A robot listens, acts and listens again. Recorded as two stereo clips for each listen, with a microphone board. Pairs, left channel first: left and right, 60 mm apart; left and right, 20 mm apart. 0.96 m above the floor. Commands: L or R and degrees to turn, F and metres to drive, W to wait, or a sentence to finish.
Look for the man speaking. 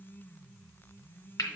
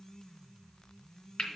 W
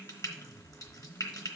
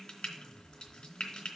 W
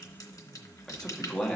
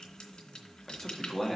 L15
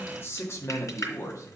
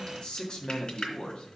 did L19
L120
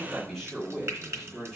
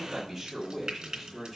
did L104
Facing the man speaking, 2 to 4 m away.